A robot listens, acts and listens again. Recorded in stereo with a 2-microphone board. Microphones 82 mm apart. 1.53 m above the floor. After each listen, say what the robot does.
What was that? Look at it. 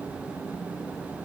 Keep listening.
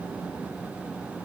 Keep listening.
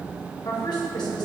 Turn 70° left.
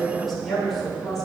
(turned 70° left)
Found it: a woman speaking, straight ahead, over 4 m away.